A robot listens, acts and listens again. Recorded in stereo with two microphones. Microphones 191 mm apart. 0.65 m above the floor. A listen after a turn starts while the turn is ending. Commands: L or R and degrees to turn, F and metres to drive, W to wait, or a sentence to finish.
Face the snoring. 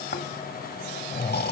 L55
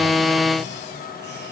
W
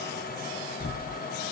L70
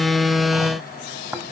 R10
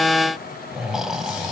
Facing the snoring.